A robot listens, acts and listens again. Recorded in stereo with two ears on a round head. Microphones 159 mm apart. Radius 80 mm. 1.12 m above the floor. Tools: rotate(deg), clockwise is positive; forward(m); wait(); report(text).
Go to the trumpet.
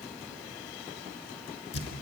wait()
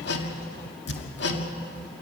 wait()
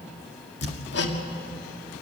report("I can't make out a trumpet, only hammering.")